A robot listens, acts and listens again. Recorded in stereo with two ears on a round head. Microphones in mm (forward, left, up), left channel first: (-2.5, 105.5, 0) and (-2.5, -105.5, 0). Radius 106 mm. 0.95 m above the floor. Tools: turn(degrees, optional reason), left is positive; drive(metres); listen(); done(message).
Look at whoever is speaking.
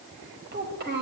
turn(degrees=-45, reason="The child speaking: about 45° right or 135° right.")
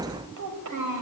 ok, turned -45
turn(degrees=-90, reason="So it is at 90° right.")
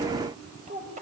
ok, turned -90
turn(degrees=-35, reason="The child speaking is now 35° right.")
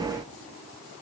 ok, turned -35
listen()
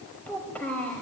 done("Found it: a child speaking, straight ahead, 2 to 4 m away.")